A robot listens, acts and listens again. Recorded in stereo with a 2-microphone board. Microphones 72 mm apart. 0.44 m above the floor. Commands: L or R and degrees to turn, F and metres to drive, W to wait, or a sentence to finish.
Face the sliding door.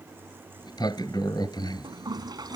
L90
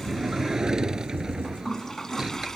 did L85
Facing the sliding door.